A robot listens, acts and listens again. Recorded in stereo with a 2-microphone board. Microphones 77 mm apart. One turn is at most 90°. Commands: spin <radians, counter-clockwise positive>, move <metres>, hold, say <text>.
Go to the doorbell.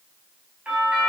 spin -0.26
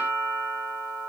spin -1.57
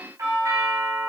spin -0.79
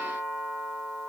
spin -0.17
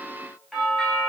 move 1.0
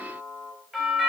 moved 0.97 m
move 1.0
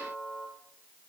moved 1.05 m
move 1.0
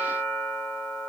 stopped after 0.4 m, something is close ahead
say I am next to the doorbell.